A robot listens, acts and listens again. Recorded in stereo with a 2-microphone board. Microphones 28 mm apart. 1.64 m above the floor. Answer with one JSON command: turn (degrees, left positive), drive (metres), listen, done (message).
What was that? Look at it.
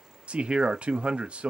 {"turn": -45}
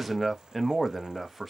{"done": "Facing the man speaking."}